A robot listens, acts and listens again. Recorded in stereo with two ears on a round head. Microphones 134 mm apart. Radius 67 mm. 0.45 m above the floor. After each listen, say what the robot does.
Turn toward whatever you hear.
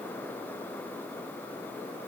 Keep listening.
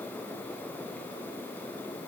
Keep listening.
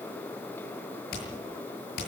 Turn 70° left.
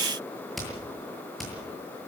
Found it: hammering, straight ahead, over 4 m away.